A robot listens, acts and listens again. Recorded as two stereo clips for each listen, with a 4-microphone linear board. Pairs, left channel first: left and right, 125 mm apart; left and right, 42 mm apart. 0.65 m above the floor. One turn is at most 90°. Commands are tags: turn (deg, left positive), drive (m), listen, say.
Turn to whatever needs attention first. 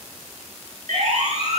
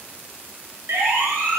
<turn deg="-70"/>
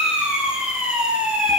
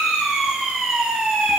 <say>Found it: a siren, straight ahead.</say>